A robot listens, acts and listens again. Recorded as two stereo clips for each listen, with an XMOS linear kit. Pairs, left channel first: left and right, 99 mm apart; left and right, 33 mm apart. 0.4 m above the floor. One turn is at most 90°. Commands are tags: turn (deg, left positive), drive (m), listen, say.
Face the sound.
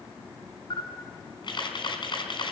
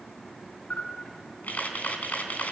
<turn deg="55"/>
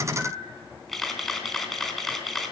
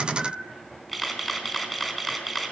<say>Facing the camera shutter.</say>